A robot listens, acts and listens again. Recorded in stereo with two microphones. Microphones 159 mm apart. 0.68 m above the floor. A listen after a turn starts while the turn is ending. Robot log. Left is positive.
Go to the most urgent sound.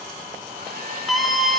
cmd yaw +30
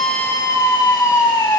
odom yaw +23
note: So it is at 155° left.
cmd yaw +155
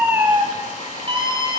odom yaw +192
note: The scream is now 35° right.
cmd yaw -35
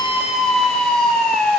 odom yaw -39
cmd fwd 1.0
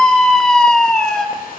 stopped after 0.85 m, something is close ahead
end: Arrived at the scream, straight ahead.